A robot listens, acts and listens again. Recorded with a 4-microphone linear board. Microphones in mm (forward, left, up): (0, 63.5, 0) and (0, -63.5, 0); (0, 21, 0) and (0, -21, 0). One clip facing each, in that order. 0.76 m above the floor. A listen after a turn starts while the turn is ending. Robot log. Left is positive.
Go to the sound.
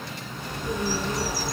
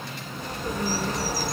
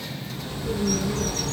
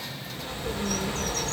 note: The bird: about 45° right or 135° right.
cmd yaw -45
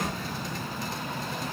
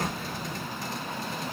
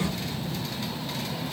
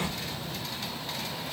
cmd idle
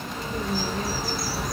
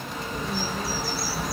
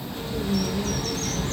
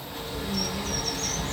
cmd fwd 1.0
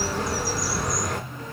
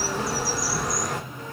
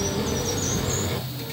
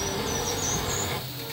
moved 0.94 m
cmd fwd 1.0
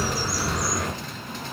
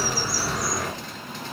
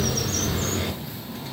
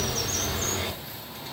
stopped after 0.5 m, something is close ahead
end: Arrived at the bird, straight ahead.